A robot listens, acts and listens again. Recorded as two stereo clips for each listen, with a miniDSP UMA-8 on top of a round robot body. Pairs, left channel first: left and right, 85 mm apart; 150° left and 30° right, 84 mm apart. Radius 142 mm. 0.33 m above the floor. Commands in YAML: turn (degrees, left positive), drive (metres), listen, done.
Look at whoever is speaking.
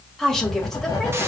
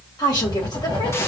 turn: 175
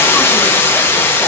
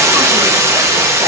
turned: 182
listen: true
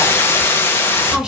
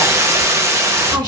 listen: true
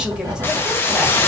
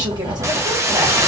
done: "I heard a woman speaking from this way, but can't make it out now."